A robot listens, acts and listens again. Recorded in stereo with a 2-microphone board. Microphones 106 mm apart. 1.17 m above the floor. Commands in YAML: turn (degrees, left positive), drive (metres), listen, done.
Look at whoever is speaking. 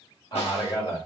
turn: 40
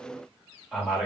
done: "Found it: a man speaking, straight ahead, 1 to 2 m away."